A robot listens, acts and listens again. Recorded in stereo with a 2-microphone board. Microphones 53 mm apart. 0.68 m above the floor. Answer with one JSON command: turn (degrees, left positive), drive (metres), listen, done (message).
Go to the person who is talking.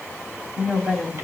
{"turn": -30}
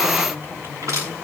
{"turn": -135}
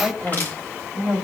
{"drive": 1.0}
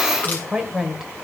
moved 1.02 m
{"turn": -10}
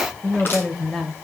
{"drive": 1.0}
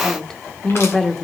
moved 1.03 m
{"drive": 1.0}
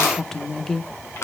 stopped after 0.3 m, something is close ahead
{"turn": 10}
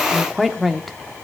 {"done": "I am next to the woman speaking."}